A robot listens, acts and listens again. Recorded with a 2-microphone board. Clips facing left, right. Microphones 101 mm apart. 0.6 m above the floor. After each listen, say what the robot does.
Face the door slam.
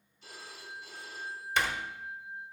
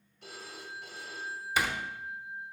Turn 30° right.
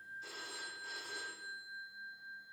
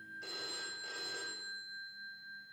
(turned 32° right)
Keep listening.
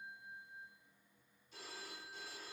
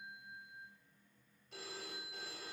I heard a door slam, but can't make it out now. It was about 25° left or 145° right.